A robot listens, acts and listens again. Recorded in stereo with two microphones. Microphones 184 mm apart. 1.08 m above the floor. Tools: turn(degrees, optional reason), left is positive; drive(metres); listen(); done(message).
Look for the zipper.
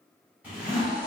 turn(degrees=-30)
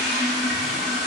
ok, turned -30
listen()
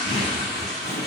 turn(degrees=-140, reason="So it is at 140° right.")
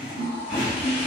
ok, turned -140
turn(degrees=-10, reason="The zipper is now 10° right.")
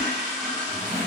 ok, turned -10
done("Found it: a zipper, straight ahead.")